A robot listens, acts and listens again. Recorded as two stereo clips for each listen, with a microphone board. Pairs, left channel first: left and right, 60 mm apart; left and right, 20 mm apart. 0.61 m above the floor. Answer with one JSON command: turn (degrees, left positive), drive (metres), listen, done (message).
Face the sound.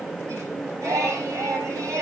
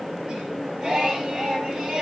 {"turn": -60}
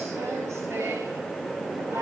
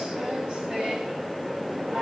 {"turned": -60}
{"turn": -50}
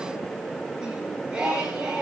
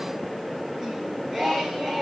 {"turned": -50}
{"turn": -15}
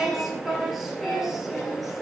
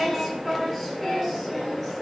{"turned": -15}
{"done": "Facing the singing, over 4 m away."}